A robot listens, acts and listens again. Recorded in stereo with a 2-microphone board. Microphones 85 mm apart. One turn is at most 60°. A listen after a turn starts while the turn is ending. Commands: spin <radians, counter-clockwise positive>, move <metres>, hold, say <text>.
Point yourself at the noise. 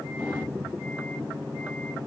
hold
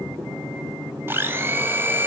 spin -0.44
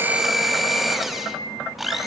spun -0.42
say Facing the blender.